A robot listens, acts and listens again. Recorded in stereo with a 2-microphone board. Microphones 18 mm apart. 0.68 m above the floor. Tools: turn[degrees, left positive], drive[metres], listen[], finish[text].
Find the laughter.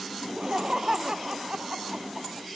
Thought: The laughter: about 45° right or 135° right.
Action: turn[-45]
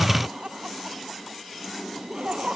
Thought: So it is at 90° right.
Action: turn[-90]
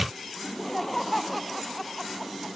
Action: finish[Facing the laughter.]